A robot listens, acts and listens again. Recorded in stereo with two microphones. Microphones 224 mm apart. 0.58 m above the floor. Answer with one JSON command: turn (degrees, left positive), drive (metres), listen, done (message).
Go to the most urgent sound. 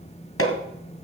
{"listen": true}
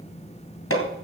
{"listen": true}
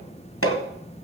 {"done": "I can't make out anything urgent, only hammering."}